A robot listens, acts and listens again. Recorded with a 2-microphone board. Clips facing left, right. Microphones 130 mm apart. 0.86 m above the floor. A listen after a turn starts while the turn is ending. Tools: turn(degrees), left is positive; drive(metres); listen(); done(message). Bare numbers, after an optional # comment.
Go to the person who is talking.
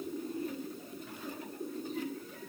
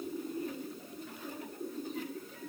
listen()
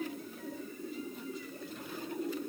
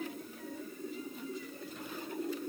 listen()
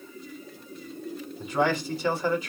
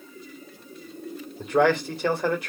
# The man speaking: about 65° right or 115° right.
turn(-65)
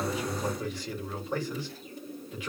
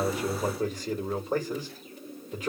# So it is at 45° right.
turn(-45)
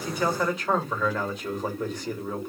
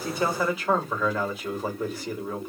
drive(1.0)
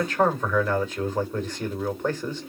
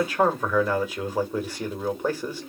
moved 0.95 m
# The man speaking is now 10° right.
turn(-10)
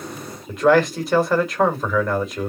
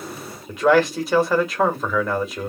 drive(1.0)
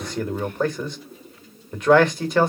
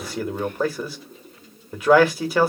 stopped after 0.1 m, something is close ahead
done("I am next to the man speaking.")